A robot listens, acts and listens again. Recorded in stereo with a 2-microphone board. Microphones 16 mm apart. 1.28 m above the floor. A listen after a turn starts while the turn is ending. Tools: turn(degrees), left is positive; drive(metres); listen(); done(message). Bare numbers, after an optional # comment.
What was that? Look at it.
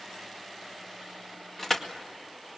# The crushing: about 20° left or 160° left.
turn(20)
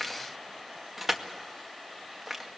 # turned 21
done("Found it: crushing, straight ahead.")